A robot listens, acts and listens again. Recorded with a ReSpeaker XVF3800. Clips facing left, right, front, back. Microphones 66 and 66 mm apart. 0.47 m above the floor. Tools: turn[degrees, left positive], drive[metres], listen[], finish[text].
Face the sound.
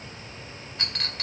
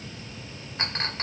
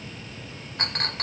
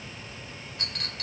Thought: The clink: 30° right.
Action: turn[-30]
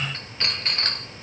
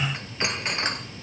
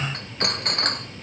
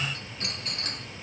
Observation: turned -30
Thought: The clink is now 15° right.
Action: turn[-15]
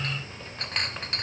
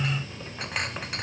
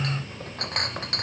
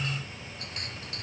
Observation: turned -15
Action: finish[Found it: a clink, straight ahead, under 1 m away.]